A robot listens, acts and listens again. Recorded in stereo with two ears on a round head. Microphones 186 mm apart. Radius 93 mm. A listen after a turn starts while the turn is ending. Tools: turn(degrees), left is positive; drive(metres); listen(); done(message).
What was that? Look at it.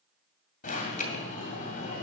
turn(degrees=40)
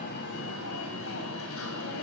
turn(degrees=100)
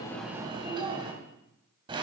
turn(degrees=-25)
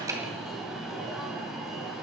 done("Facing the alarm, 2 to 4 m away.")